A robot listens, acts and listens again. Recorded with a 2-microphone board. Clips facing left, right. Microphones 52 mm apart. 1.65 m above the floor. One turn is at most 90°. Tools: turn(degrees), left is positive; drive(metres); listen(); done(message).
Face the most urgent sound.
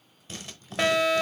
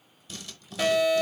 turn(degrees=60)
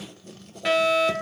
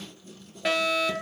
done("Found it: a fire alarm, straight ahead, 1 to 2 m away.")